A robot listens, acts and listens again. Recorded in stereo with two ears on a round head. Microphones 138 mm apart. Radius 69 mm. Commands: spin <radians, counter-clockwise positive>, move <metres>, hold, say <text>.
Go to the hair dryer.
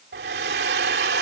spin -1.57
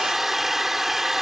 move 1.0
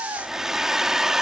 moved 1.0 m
move 1.0
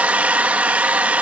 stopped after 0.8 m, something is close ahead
spin -0.17
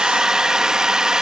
say I am next to the hair dryer.